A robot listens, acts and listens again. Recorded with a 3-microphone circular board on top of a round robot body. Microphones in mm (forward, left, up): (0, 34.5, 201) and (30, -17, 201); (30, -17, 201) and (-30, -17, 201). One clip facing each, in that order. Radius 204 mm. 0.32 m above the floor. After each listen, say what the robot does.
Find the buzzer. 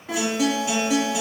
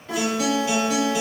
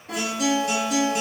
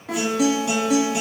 Keep listening.
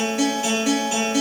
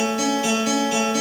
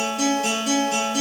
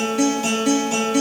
Keep listening.
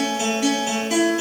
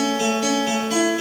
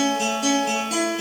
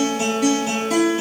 I can't make out a buzzer to turn to.